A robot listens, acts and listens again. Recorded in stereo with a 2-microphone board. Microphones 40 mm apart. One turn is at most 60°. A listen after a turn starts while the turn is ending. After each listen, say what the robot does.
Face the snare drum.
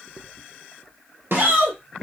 Turn 60° right.
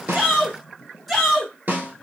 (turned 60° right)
Turn 50° right.
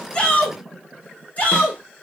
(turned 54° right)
Keep listening.
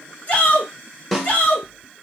Found it: a snare drum, straight ahead.